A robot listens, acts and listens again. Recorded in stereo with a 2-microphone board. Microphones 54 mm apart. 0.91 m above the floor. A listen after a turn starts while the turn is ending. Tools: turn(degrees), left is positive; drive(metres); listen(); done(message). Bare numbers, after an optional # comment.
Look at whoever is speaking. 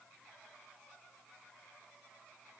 listen()
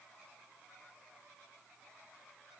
listen()
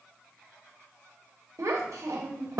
turn(-90)
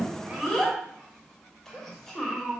done("Facing the child speaking, 1 to 2 m away.")